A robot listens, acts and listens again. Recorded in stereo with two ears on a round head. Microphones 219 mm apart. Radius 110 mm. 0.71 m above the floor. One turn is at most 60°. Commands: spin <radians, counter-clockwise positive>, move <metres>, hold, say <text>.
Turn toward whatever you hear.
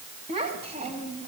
spin -0.44
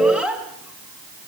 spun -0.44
say Found it: a child speaking, straight ahead.